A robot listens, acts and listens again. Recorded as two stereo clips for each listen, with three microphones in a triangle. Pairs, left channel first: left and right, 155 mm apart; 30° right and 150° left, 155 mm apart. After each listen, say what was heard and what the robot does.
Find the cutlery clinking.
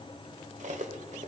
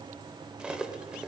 The cutlery clinking: 125° right. Turn 125° right.
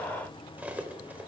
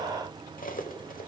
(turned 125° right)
The cutlery clinking is now 10° right. Turn 10° right.
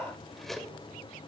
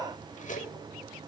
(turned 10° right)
Found it: cutlery clinking, straight ahead.